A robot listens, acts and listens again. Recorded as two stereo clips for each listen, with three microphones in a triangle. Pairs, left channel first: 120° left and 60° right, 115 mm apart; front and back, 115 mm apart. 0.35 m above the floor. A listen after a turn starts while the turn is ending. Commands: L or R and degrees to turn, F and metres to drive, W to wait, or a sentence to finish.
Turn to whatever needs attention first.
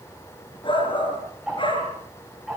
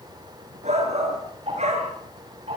L165
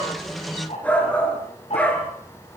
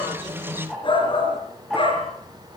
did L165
L40
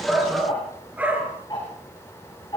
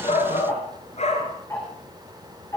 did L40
L15
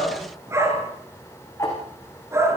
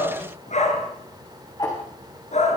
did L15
Found it: a shout, straight ahead.